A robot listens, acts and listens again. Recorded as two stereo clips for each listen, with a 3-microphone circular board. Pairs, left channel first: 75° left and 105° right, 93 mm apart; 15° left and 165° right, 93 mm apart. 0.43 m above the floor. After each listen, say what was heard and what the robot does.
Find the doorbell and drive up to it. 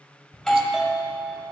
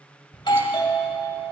The doorbell: 15° right. Turn 15° right.
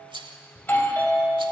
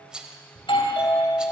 Drive 1.0 m forward.
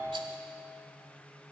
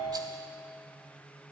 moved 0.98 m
The doorbell is now 15° left. Turn 15° left.
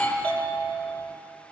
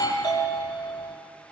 Drive 1.0 m forward.
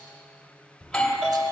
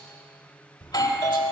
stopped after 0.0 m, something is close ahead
Arrived at the doorbell, straight ahead.